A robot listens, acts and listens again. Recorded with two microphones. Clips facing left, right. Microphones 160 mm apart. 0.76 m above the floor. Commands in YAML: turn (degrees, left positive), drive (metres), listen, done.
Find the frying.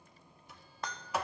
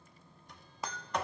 turn: -30
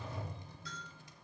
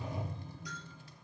listen: true
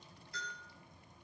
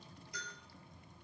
listen: true
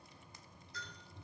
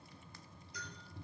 done: "I heard frying, but can't make it out now. It was about 25° left or 145° right."